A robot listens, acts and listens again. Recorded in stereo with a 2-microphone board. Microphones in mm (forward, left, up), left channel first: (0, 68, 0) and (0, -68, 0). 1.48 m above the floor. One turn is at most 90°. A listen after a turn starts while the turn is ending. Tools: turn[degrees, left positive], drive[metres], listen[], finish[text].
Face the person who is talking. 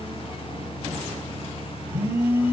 Action: listen[]
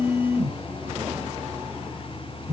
Action: listen[]
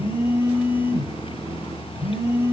Action: finish[I can't make out anyone speaking to turn to.]